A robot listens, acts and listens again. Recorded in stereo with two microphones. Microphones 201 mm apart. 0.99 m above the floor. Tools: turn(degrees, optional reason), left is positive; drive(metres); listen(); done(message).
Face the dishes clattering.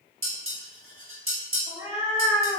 turn(degrees=-90)
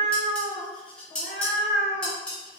done("Found it: dishes clattering, straight ahead, 1 to 2 m away.")